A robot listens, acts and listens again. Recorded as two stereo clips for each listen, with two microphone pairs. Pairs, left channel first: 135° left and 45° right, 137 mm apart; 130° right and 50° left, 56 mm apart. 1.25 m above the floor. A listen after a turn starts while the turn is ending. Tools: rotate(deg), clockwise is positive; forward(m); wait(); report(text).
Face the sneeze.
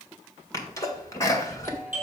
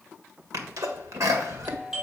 rotate(-70)
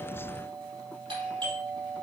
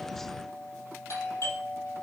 report("I heard a sneeze from this way, but can't make it out now.")